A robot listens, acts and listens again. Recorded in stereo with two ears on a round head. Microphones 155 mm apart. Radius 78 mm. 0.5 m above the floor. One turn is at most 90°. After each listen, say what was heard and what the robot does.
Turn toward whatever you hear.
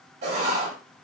The writing: about 45° right or 135° right. Turn 45° right.
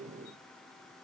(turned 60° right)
Keep listening.
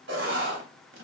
So it is at 75° right. Turn 75° right.
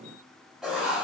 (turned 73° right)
Found it: writing, straight ahead, under 1 m away.